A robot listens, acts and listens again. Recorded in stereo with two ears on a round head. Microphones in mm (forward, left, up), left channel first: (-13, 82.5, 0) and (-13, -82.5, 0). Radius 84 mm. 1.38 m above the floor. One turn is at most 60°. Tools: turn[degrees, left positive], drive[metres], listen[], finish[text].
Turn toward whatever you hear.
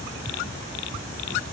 Action: listen[]
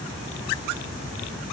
Action: listen[]
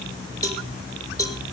Thought: The cowbell: about 20° left or 160° left.
Action: turn[20]
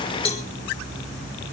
Thought: So it is at 145° left.
Action: turn[60]
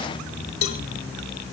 Thought: The cowbell is now 85° left.
Action: turn[60]
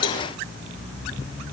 Thought: The cowbell is now 25° left.
Action: turn[25]
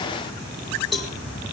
Action: finish[Found it: a cowbell, straight ahead, 2 to 4 m away.]